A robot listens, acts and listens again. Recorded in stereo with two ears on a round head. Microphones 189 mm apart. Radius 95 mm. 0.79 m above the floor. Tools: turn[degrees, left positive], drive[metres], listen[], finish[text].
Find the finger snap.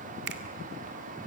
Thought: The finger snap: about 55° right or 125° right.
Action: turn[-55]
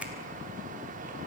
Action: listen[]
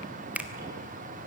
Thought: So it is at 10° right.
Action: turn[-10]
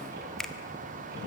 Action: finish[Found it: a finger snap, straight ahead, 1 to 2 m away.]